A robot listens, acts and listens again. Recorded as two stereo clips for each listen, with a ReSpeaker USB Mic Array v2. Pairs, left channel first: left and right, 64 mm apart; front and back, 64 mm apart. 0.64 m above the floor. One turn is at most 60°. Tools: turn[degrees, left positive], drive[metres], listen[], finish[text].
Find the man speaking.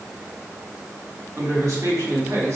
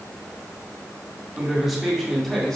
Thought: The man speaking: 80° right.
Action: turn[-60]
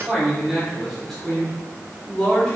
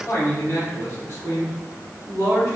Thought: The man speaking is now 15° left.
Action: turn[15]
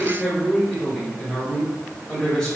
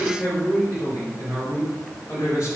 Thought: The man speaking is now 15° left.
Action: turn[15]
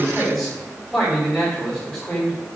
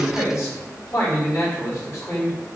Action: finish[Facing the man speaking.]